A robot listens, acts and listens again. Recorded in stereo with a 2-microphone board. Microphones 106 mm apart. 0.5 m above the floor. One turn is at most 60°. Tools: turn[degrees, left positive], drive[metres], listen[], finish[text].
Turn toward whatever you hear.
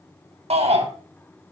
Thought: The shout: about 75° right or 105° right.
Action: turn[-60]
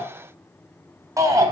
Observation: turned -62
Thought: So it is at 30° right.
Action: turn[-30]
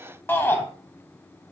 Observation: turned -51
Thought: The shout is now 20° left.
Action: turn[20]
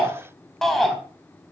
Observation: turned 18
Action: finish[Facing the shout.]